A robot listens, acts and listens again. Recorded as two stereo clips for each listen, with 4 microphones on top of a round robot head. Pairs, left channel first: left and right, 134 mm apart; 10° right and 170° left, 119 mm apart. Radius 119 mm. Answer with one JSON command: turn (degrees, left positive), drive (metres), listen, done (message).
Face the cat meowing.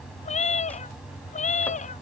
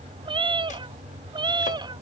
{"turn": 120}
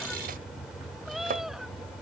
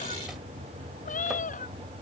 {"done": "Facing the cat meowing."}